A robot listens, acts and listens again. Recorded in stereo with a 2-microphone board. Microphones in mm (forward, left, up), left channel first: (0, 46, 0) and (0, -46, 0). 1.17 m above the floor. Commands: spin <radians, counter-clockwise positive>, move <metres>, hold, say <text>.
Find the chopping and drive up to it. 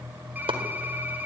spin -1.57
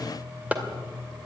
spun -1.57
spin -0.26
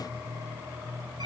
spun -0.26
hold
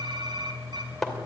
move 1.0
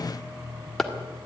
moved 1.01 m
move 1.0
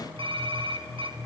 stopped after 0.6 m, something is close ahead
hold
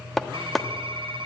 say I am next to the chopping.